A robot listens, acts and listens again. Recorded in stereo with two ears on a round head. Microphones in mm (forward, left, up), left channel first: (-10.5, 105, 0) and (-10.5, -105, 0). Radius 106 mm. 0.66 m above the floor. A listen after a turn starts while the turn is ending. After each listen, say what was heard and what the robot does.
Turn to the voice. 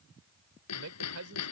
The man speaking: about 70° right or 110° right. Turn 70° right.
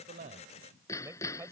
So it is at 10° right. Turn 10° right.
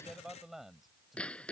Found it: a man speaking, straight ahead.